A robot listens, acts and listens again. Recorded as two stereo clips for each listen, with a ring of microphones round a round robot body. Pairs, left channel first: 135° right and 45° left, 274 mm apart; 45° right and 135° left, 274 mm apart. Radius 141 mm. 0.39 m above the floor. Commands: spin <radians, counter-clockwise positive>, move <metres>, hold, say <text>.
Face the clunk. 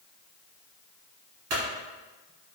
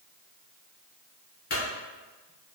spin 0.26
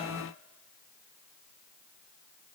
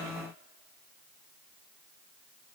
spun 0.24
say I heard a clunk from this way, but can't make it out now.